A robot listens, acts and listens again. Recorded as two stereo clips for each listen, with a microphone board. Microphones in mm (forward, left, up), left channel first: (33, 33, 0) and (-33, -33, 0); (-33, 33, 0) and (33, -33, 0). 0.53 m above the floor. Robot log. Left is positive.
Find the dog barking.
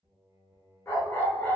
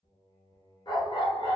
note: The dog barking: 110° left.
cmd yaw +110
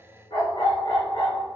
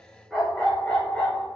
note: The dog barking is now 65° left.
cmd yaw +65
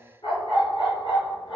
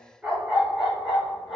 note: The dog barking is now 45° left.
cmd yaw +45
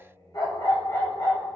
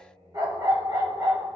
end: Facing the dog barking.